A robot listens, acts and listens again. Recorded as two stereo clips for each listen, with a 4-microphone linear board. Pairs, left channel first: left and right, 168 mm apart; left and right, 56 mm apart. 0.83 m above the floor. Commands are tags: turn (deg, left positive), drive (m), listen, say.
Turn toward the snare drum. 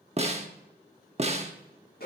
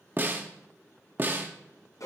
<turn deg="-40"/>
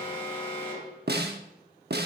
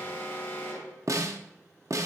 <turn deg="-100"/>
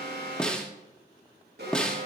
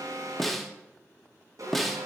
<say>Facing the snare drum, 1 to 2 m away.</say>